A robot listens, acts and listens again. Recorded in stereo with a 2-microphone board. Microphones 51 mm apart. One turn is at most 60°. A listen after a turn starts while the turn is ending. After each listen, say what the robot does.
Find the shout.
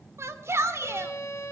Turn 60° right.
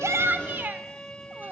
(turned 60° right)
Turn 45° right.
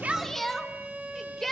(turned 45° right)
Found it: a shout, straight ahead, 2 to 4 m away.